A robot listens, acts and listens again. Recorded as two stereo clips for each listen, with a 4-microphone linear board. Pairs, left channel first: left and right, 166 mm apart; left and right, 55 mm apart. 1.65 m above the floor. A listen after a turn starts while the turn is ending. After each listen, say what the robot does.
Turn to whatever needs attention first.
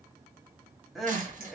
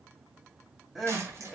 Turn 30° left.
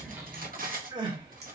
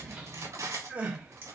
Turn 30° right.
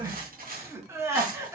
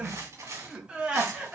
Turn 20° right.
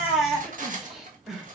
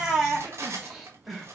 Found it: crying, straight ahead, 1 to 2 m away.